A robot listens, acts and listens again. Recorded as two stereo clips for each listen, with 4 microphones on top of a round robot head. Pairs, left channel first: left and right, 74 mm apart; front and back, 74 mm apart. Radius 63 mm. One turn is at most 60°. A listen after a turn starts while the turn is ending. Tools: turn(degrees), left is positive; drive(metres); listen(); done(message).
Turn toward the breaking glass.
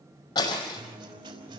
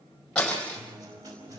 turn(degrees=60)
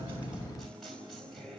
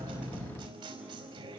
turn(degrees=15)
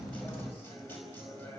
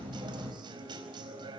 done("Facing where the breaking glass came from. I can't hear it now.")